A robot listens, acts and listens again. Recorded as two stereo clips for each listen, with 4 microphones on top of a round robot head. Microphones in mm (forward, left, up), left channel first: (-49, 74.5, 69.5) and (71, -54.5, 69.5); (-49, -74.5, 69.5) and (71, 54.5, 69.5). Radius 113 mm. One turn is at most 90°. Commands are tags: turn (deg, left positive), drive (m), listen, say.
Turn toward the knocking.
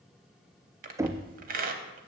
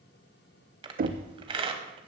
<turn deg="25"/>
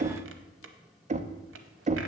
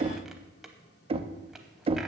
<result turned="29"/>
<say>Facing the knocking, under 1 m away.</say>